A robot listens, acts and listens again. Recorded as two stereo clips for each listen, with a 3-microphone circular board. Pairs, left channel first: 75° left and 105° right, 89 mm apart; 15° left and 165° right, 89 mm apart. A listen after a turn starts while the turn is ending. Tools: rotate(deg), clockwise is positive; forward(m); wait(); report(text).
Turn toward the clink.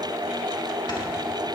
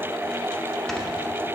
wait()
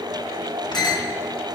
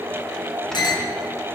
rotate(-45)
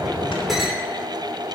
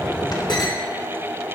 wait()
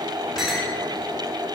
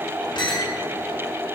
rotate(15)
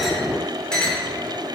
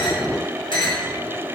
report("Found it: a clink, straight ahead, 2 to 4 m away.")